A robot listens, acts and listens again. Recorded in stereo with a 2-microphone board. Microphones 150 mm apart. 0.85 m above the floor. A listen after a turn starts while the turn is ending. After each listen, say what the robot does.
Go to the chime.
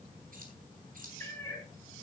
Keep listening.
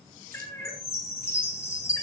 Turn 15° left.
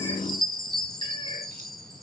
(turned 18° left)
Drive 1.0 m forward.
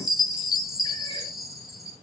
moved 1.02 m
Drive 1.0 m forward.
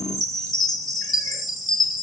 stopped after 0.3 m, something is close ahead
Arrived at the chime, straight ahead.